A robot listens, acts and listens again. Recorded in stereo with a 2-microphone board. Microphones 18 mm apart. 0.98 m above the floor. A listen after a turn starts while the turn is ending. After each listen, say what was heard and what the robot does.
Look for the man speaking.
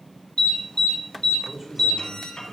The man speaking: about 25° right or 155° right. Turn 25° right.
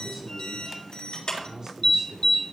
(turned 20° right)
The man speaking: about 45° right or 135° right. Turn 45° right.
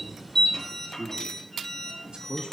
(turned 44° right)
So it is at 115° right. Turn 115° right.
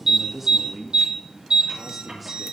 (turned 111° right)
Found it: a man speaking, straight ahead, 1 to 2 m away.